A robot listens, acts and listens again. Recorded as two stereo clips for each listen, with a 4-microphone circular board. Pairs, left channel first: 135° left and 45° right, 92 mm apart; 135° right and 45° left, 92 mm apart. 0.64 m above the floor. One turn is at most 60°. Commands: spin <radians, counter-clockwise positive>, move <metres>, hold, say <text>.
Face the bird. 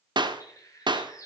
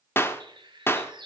spin 1.05
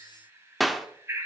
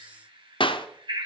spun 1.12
spin 0.26
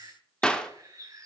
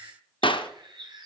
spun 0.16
spin 0.17
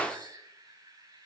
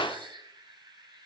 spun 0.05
say Found it: a bird, straight ahead.